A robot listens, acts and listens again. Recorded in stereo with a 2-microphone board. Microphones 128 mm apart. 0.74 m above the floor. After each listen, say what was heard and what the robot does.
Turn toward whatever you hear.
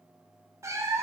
The cat meowing: about 25° right or 155° right. Turn 25° right.
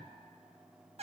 So it is at 125° right. Turn 125° right.
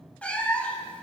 The cat meowing is now 10° left. Turn 10° left.
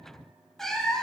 Found it: a cat meowing, straight ahead.